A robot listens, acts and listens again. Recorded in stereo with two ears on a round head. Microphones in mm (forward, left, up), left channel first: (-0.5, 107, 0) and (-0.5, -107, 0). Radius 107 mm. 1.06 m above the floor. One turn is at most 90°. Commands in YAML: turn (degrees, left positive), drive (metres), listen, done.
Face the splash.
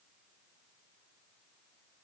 listen: true
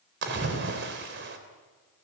turn: -50
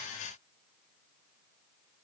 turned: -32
listen: true
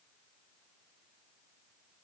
done: "I heard a splash, but can't make it out now. It was about 20° right or 100° right."